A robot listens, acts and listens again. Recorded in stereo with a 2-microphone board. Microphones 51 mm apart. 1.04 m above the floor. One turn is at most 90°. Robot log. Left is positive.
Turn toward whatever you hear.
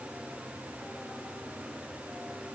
cmd idle
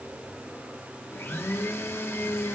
note: The blender: about 50° left or 130° left.
cmd yaw +50
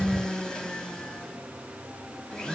note: So it is at 20° left.
cmd yaw +20
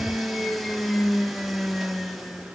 end: Found it: a blender, straight ahead, under 1 m away.